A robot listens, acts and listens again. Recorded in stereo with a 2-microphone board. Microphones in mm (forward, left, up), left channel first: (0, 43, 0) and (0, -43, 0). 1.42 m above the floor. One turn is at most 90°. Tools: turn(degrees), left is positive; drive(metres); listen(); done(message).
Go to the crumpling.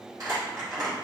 turn(degrees=-45)
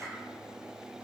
listen()
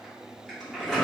drive(metres=1.0)
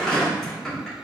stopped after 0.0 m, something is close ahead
done("Something is in my way. I am facing the crumpling but have not reached it.")